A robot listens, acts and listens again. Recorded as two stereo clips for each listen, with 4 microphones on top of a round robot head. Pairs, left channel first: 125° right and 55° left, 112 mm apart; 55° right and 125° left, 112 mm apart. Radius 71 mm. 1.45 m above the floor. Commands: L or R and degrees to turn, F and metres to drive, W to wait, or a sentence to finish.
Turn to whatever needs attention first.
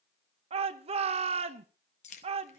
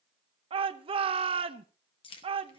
L85
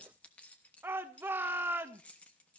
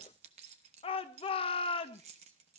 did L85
R15
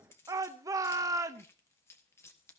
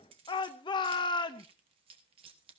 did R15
Facing the shout.